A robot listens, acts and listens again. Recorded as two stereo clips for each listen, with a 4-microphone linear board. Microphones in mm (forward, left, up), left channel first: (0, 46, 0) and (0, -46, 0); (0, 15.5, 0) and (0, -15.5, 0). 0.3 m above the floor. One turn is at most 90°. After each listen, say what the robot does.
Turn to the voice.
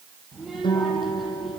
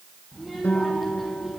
Turn 30° left.
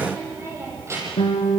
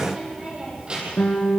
Turn 30° right.
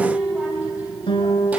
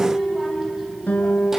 Turn 15° right.
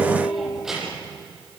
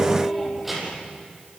Found it: a child speaking, straight ahead.